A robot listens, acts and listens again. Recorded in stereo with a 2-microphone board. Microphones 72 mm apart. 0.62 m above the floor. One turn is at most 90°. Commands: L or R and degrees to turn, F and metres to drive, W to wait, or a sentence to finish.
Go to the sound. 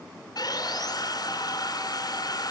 L60
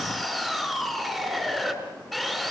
F1.0
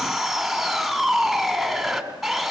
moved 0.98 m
F1.0
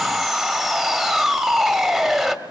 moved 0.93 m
F1.0
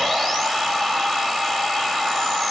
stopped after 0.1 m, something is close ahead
Arrived at the sawing, straight ahead.